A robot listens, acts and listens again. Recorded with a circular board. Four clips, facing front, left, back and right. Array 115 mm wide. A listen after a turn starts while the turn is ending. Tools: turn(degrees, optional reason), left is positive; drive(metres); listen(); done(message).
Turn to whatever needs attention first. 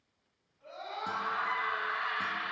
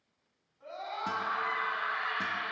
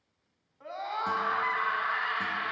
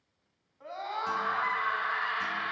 turn(degrees=-145, reason="The scream: 145° right.")
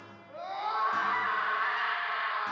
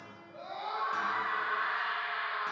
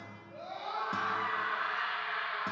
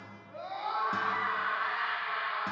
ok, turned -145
turn(degrees=-10, reason="The scream is now 10° right.")
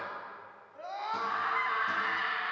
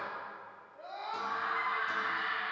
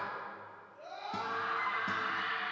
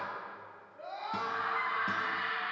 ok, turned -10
done("Facing the scream.")